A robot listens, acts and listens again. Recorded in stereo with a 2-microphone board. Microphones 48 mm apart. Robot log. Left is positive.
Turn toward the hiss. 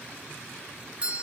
cmd idle
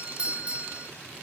cmd idle
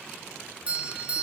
end: I can't make out a hiss, only a doorbell.